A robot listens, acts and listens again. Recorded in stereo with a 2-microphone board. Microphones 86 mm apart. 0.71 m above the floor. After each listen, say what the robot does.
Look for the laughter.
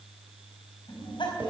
Turn 70° left.
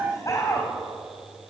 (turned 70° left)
Turn 45° left.
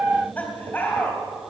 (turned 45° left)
Turn 20° left.
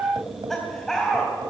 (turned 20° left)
Facing the laughter, 2 to 4 m away.